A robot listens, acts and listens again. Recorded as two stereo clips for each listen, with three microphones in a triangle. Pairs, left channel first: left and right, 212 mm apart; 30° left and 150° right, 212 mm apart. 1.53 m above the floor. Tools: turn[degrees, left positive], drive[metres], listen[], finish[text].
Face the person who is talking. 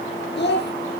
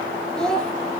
Thought: The child speaking: 115° left.
Action: turn[115]
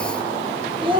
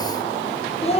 Thought: The child speaking is now 30° right.
Action: turn[-30]
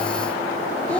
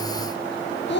Action: finish[Facing the child speaking, under 1 m away.]